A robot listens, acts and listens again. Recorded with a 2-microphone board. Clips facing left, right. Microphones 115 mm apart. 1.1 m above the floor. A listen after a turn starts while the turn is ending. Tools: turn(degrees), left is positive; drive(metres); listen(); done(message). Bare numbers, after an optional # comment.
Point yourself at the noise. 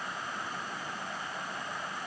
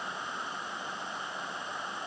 listen()
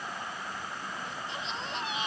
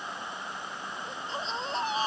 # The baby crying: about 35° right or 145° right.
turn(-35)
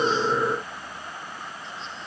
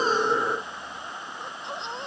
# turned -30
# So it is at 115° right.
turn(-115)
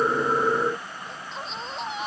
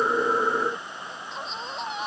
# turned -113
done("Found it: a baby crying, straight ahead.")